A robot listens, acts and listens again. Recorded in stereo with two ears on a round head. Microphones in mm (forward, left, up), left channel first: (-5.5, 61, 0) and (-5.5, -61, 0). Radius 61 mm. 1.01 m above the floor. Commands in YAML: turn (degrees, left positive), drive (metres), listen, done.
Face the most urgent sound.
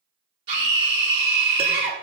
turn: -35
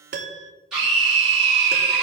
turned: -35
done: "Facing the scream, 2 to 4 m away."